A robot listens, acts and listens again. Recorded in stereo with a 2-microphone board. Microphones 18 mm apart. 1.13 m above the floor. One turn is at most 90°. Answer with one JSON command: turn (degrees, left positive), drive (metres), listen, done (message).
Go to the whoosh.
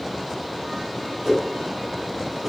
{"turn": -30}
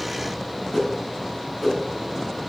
{"turn": 20}
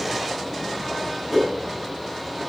{"drive": 1.0}
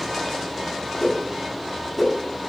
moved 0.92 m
{"turn": 10}
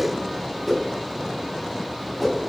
{"drive": 1.0}
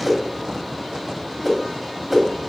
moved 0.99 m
{"turn": 10}
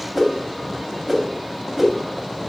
{"drive": 1.0}
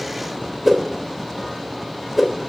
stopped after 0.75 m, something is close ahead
{"turn": 10}
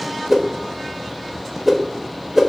{"done": "I am next to the whoosh."}